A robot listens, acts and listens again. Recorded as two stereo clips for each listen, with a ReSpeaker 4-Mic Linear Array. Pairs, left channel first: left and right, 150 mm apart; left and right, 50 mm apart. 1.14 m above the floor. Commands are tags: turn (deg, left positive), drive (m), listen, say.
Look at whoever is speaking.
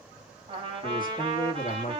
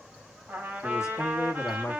<turn deg="65"/>
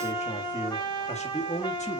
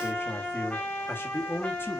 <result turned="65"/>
<turn deg="50"/>
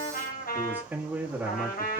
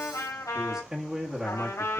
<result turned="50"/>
<turn deg="-10"/>
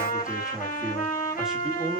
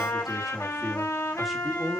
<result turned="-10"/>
<say>Facing the man speaking.</say>